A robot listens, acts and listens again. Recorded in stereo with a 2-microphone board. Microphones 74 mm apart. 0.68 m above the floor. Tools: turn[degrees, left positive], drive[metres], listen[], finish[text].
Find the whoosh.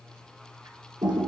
Action: listen[]
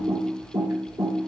Action: listen[]
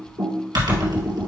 Action: finish[I can't make out a whoosh to turn to.]